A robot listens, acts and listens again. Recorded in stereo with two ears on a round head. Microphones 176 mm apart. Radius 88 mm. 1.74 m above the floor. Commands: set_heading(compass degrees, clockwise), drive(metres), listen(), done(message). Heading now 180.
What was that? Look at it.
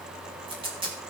set_heading(210)
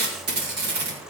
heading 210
set_heading(330)
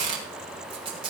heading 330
set_heading(355)
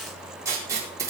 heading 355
set_heading(10)
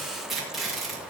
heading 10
done("Found it: tape being pulled, straight ahead, over 4 m away.")